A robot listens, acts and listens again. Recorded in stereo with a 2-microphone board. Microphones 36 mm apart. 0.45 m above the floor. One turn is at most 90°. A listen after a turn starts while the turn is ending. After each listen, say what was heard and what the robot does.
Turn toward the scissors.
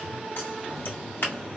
The scissors: about 65° left or 115° left. Turn 65° left.
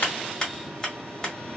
So it is at 15° left. Turn 15° left.
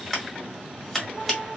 Found it: scissors, straight ahead.